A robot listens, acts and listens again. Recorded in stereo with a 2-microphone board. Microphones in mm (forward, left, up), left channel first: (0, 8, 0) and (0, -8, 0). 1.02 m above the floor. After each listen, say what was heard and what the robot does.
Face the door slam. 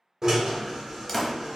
Turn 30° left.
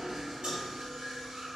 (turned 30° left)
Keep listening.
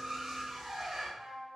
I heard a door slam, but can't make it out now. It was about 20° right or 140° left.